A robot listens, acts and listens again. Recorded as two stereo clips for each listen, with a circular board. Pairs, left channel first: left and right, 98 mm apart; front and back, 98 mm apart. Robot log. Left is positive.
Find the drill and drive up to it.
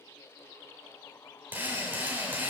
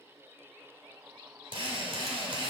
note: The drill: 160° right.
cmd yaw -160
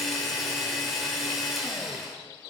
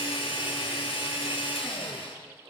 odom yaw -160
cmd fwd 1.0
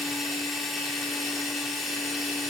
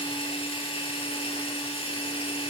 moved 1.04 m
cmd fwd 1.0
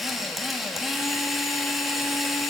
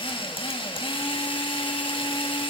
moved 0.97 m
cmd fwd 1.0
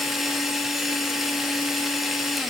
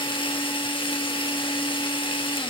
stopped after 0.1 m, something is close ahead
end: Arrived at the drill, straight ahead.